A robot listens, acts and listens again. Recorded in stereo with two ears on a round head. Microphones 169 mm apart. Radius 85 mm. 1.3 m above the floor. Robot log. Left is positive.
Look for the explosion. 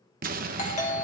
note: The explosion: about 45° right or 135° right.
cmd yaw -45
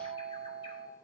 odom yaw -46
cmd idle
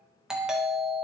end: I heard an explosion, but can't make it out now. It was about straight ahead or 85° right.